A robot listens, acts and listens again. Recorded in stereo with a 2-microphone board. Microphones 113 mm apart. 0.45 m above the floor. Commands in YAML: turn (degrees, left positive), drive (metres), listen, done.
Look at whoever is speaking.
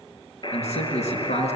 turn: 90
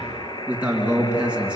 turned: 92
turn: -10
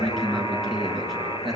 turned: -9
done: "Found it: a man speaking, straight ahead."